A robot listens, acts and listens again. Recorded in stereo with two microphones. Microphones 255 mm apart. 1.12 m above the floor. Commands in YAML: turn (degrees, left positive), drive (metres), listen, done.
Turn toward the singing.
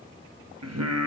turn: -90
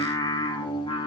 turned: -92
turn: 20
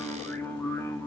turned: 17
turn: 10
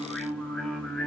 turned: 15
done: "Facing the singing, 2 to 4 m away."